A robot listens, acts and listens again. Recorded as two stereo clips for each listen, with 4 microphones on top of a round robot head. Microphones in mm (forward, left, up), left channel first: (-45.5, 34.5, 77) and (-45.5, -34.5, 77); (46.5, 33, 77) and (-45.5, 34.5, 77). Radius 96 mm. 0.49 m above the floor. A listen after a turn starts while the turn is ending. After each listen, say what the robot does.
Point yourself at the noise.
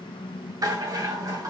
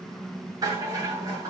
Turn 130° right.
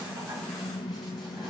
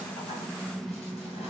Keep listening.
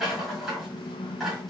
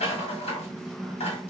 Found it: a rattle, straight ahead, 2 to 4 m away.